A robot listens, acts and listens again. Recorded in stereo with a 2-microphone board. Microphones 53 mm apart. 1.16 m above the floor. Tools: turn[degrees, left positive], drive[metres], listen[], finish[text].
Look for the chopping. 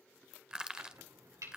Action: turn[-90]
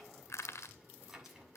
Action: finish[Found it: chopping, straight ahead, over 4 m away.]